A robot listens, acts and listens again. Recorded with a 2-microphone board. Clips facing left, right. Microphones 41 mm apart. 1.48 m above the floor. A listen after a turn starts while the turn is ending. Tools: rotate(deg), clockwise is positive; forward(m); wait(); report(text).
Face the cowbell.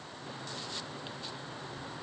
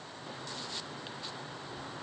wait()
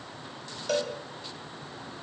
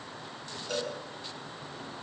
rotate(-70)
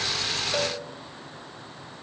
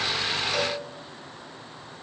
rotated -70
wait()
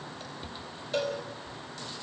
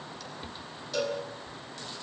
rotate(-35)
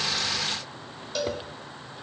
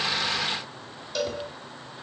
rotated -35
report("Facing the cowbell.")